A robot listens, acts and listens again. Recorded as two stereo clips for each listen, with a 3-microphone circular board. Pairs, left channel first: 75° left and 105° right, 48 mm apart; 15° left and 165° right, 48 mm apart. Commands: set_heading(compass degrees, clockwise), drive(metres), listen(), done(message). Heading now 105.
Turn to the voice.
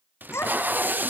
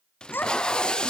set_heading(50)
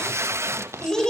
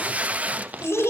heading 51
done("Found it: a child speaking, straight ahead.")